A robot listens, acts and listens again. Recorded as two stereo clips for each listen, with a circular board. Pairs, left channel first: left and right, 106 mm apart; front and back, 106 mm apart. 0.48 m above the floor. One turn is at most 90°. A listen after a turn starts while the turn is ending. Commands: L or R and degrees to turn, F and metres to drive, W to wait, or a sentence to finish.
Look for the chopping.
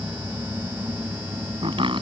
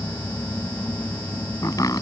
R55
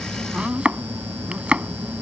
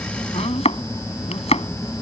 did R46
R10
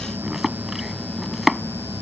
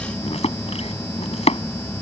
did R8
Facing the chopping.